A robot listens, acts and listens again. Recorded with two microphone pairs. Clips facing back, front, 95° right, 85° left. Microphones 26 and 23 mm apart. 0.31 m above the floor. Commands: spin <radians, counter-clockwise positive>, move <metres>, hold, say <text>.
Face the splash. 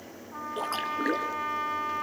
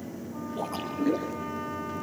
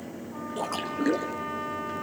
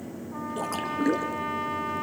spin 3.14
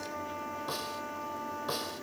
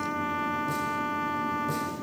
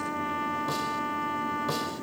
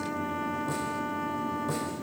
say Facing where the splash came from. I can't hear it now.